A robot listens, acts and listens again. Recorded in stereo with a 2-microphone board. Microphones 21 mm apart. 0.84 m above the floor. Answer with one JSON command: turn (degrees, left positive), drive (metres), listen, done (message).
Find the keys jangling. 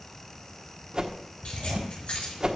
{"turn": 90}
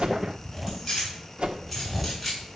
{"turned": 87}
{"done": "Found it: keys jangling, straight ahead."}